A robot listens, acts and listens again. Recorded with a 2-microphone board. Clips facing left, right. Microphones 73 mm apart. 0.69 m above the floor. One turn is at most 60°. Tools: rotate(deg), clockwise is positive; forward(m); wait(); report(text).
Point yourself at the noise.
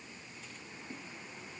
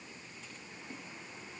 wait()
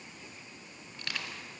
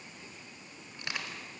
rotate(20)
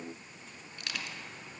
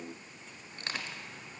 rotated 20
rotate(60)
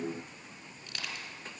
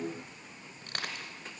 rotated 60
rotate(60)
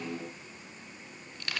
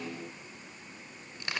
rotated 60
rotate(25)
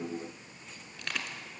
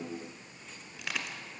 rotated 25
report("Facing the crushing.")